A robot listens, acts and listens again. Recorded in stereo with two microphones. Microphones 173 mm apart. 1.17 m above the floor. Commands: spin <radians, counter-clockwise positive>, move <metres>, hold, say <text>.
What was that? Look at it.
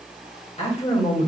spin 0.61
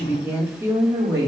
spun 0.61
spin -0.35
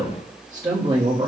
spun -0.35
spin -0.52
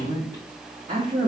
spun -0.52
spin -0.61
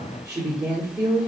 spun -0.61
spin -0.17
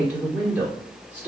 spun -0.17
say Found it: a woman speaking, straight ahead.